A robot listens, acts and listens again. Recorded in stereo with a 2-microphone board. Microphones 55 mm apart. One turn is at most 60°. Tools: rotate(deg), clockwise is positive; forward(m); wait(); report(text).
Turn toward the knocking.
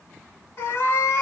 wait()
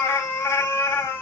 wait()
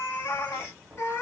rotate(-30)
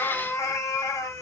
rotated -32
wait()
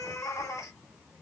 wait()
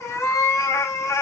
report("I heard knocking, but can't make it out now. It was about 20° right or 135° left.")